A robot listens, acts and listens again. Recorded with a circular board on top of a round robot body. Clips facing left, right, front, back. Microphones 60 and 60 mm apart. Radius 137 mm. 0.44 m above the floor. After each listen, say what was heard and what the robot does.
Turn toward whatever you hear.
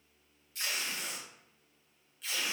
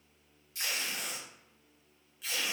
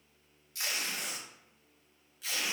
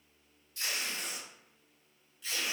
Facing the tape being pulled, under 1 m away.